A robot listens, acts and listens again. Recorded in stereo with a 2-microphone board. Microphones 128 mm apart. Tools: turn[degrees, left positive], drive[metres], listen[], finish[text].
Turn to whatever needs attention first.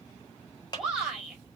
Action: turn[-30]
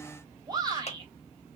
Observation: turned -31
Thought: So it is at 145° right.
Action: turn[-145]
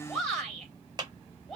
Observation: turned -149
Action: finish[Found it: a shout, straight ahead.]